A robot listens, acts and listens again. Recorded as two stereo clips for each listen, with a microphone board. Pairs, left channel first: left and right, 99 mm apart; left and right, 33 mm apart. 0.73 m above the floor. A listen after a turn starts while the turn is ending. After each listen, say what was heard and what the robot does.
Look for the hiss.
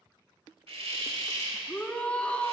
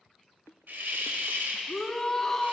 Turn 90° right.
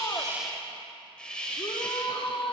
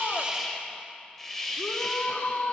So it is at 10° left. Turn 10° left.
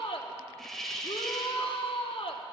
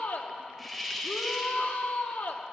Facing the hiss.